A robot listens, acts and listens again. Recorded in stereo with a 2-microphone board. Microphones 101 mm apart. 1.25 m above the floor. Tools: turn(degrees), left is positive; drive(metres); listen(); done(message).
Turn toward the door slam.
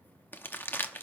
listen()
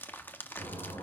turn(degrees=70)
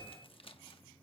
listen()
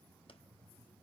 done("I heard a door slam, but can't make it out now. It was about straight ahead or 40° left.")